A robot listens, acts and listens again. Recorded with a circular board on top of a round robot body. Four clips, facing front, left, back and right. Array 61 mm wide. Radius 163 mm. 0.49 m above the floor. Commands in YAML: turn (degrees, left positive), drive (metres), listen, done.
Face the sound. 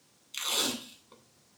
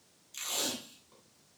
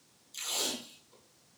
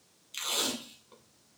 turn: -40
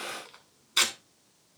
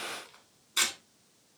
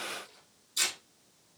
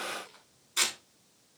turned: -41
done: "Facing the tape being pulled."